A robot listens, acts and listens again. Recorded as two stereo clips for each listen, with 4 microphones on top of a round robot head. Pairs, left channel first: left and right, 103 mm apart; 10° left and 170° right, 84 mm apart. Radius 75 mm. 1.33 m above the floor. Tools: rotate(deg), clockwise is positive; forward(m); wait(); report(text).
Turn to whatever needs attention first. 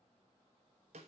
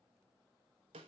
wait()
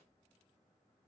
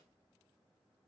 wait()
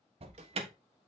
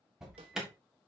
rotate(85)
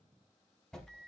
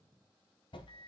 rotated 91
report("Facing the alarm.")